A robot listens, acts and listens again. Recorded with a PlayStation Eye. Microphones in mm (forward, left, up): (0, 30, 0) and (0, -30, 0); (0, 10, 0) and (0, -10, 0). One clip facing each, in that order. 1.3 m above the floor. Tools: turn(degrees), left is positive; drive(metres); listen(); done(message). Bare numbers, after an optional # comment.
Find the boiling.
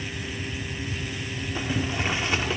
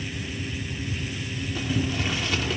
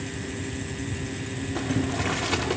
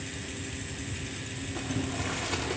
# The boiling: about 30° left or 150° left.
turn(30)
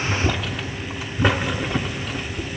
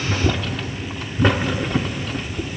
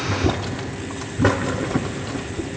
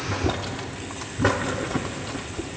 done("Facing the boiling.")